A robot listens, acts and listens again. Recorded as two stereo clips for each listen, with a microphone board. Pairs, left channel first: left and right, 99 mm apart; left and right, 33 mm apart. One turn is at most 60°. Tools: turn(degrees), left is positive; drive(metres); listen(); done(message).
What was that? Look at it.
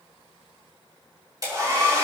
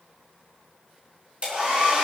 turn(degrees=-40)
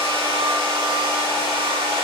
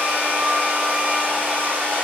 turn(degrees=-60)
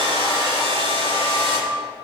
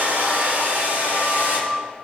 turn(degrees=-60)
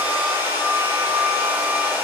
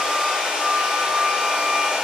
turn(degrees=-20)
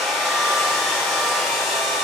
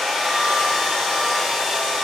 done("Found it: a hair dryer, straight ahead, 2 to 4 m away.")